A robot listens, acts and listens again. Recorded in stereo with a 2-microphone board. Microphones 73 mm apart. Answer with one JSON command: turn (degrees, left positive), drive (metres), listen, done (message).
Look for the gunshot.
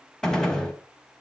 {"turn": 30}
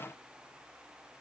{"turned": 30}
{"listen": true}
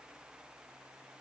{"done": "I heard a gunshot, but can't make it out now. It was about 20° right or 140° left."}